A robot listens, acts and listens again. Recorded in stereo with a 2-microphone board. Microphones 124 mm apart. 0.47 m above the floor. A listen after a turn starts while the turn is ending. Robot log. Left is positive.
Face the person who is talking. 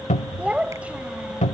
cmd yaw -30
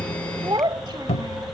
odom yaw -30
note: So it is at 140° right.
cmd yaw -140
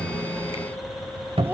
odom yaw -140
cmd idle
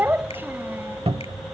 note: The child speaking is now 20° right.
cmd yaw -20
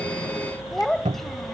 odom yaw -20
end: Found it: a child speaking, straight ahead.